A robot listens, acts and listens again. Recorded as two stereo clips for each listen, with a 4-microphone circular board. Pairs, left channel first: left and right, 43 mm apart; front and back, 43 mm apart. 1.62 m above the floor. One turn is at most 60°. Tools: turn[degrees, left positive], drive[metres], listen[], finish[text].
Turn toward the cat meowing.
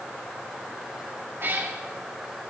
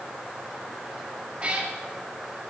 Thought: The cat meowing: 120° right.
Action: turn[-60]
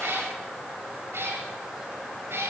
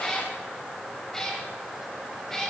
Thought: The cat meowing is now 75° right.
Action: turn[-60]
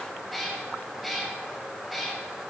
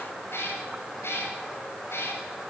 Action: finish[Facing the cat meowing, over 4 m away.]